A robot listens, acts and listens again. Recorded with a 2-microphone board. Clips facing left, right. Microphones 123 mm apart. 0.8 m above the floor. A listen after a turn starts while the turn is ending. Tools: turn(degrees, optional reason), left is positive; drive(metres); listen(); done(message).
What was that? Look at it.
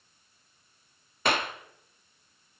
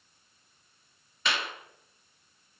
turn(degrees=50, reason="The clap: about 50° left or 130° left.")
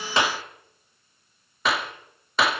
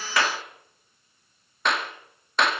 done("Facing the clap.")